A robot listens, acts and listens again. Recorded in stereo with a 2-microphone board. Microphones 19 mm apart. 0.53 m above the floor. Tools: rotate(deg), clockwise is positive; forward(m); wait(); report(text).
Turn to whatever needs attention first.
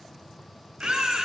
rotate(90)
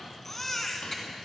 rotate(-20)
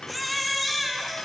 report("Facing the baby crying, 1 to 2 m away.")